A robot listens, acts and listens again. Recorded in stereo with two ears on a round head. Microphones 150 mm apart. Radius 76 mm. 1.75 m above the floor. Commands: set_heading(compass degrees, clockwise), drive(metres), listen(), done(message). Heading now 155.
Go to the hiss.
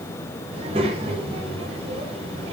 listen()
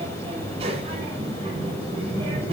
listen()
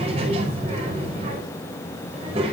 done("I can't make out a hiss, only a child speaking.")